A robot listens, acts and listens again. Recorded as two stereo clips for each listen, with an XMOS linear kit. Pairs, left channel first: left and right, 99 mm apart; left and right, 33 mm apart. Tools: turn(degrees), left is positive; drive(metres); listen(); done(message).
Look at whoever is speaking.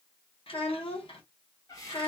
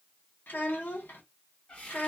turn(degrees=90)
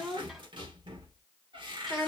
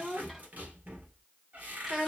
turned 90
done("Found it: a child speaking, straight ahead, 1 to 2 m away.")